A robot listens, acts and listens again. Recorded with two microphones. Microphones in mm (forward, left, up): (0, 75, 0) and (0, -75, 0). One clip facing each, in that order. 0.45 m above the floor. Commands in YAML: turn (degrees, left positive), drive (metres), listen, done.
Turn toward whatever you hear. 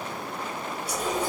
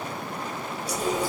turn: 60
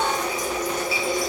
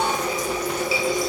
turn: 60
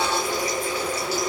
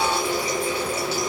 turn: -25
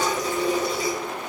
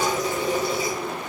done: "Found it: a running tap, straight ahead."